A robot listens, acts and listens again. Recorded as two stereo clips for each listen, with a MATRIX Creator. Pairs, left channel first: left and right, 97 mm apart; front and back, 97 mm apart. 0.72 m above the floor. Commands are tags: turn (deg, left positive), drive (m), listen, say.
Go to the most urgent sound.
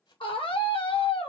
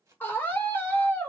<turn deg="70"/>
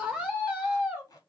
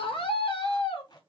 <turn deg="-15"/>
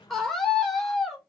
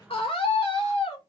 <drive m="1.0"/>
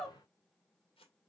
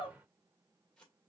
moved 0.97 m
<drive m="1.0"/>
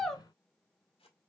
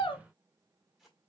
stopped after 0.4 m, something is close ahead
<say>Arrived at the scream, straight ahead.</say>